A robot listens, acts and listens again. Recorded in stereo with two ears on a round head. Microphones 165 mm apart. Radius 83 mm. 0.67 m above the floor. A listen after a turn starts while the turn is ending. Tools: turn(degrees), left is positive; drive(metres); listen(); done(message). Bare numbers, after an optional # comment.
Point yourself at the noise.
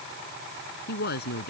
# The woman speaking: about 55° left or 125° left.
turn(55)
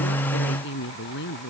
# So it is at 60° left.
turn(60)
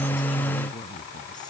# The woman speaking is now 25° left.
turn(25)
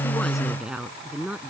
done("Found it: a woman speaking, straight ahead.")